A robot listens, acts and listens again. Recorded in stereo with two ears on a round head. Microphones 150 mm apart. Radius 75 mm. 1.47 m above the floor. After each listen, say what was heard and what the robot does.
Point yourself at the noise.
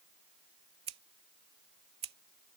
The scissors: about 35° right or 145° right. Turn 35° right.
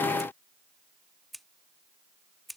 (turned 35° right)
Facing the scissors.